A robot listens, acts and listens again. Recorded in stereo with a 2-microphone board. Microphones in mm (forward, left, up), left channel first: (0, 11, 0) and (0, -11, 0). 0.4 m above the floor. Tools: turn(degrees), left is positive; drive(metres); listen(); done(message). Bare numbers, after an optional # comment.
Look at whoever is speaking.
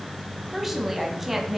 turn(-30)
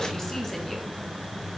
listen()
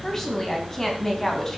# So it is at 20° left.
turn(20)
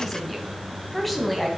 done("Found it: a woman speaking, straight ahead.")